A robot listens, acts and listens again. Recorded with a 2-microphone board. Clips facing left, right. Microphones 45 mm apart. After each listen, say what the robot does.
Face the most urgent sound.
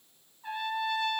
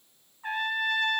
Keep listening.
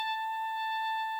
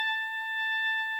Keep listening.
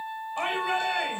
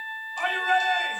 Turn 25° left.
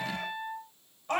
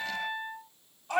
Turn 130° left.
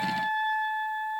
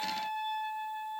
Keep listening.
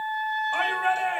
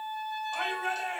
Turn 40° left.
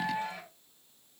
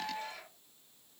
Keep listening.
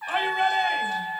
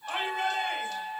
Turn 15° left.
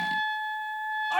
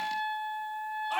Keep listening.
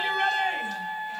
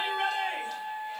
Facing the shout, 2 to 4 m away.